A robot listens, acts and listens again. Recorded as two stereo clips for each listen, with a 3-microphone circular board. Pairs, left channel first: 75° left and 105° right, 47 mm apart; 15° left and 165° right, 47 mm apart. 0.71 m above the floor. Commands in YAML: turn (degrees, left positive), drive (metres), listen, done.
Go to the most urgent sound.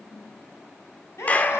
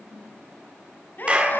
turn: 60
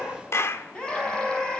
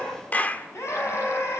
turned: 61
drive: 1.0
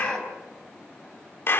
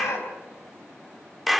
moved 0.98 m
drive: 1.0
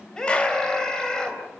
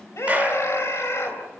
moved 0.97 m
drive: 1.0
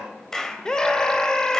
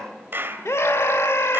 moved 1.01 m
drive: 1.0
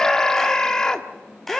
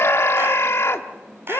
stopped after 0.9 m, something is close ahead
done: "I am next to the scream."